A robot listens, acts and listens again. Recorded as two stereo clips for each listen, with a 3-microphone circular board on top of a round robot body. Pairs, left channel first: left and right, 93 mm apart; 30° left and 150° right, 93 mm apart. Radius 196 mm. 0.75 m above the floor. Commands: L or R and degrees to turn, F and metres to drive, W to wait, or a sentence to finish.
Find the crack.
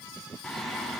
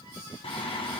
W
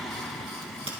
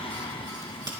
R105
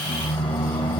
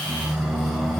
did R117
L15
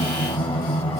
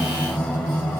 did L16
Facing where the crack came from. I can't hear it now.